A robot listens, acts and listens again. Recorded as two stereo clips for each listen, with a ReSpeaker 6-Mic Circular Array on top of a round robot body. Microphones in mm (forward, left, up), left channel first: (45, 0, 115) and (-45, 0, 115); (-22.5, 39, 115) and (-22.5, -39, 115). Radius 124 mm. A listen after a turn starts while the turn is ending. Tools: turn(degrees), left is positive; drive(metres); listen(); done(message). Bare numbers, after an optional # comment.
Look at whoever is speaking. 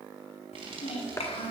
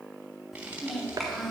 done("Facing the child speaking, 1 to 2 m away.")